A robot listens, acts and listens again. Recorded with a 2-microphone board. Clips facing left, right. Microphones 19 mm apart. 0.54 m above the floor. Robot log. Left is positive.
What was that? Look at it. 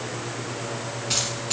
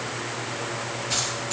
note: The keys jangling: about 30° left or 150° left.
cmd yaw +30
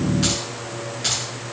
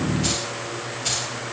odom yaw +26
note: So it is at 120° left.
cmd yaw +120
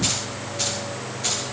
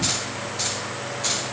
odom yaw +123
note: The keys jangling is now 10° right.
cmd yaw -10
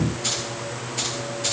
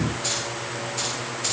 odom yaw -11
end: Facing the keys jangling.